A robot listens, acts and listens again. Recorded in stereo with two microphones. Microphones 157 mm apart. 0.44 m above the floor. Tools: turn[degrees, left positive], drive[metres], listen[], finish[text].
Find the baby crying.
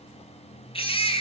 Thought: The baby crying: about 35° left or 145° left.
Action: turn[35]
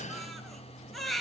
Action: finish[Found it: a baby crying, straight ahead, 2 to 4 m away.]